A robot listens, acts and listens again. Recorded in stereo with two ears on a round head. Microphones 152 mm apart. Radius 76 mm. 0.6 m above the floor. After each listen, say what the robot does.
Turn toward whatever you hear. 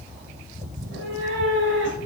Turn 90° right.
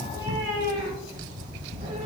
Turn 40° right.
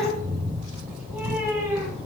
Turn 15° right.
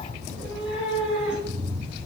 Facing the cat meowing.